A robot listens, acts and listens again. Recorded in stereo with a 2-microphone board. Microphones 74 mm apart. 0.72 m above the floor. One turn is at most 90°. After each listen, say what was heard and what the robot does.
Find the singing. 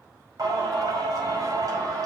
The singing: about 55° right or 125° right. Turn 55° right.
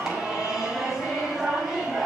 Facing the singing.